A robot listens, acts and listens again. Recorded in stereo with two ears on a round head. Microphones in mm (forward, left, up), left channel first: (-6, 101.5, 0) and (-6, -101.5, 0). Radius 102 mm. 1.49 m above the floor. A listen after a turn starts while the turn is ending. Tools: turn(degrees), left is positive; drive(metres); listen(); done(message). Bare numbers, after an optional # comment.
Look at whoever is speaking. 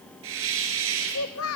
# The child speaking: about 70° left or 110° left.
turn(70)
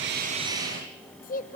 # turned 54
# So it is at 40° left.
turn(40)
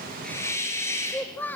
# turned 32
# The child speaking is now 10° left.
turn(10)
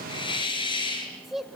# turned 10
done("Found it: a child speaking, straight ahead.")